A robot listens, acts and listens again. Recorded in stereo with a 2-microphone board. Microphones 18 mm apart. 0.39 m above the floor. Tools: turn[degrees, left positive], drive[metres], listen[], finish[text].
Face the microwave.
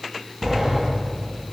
Action: listen[]
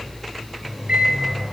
Action: turn[-90]
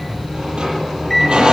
Action: listen[]
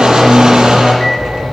Action: listen[]
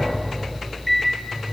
Action: finish[Found it: a microwave, straight ahead, over 4 m away.]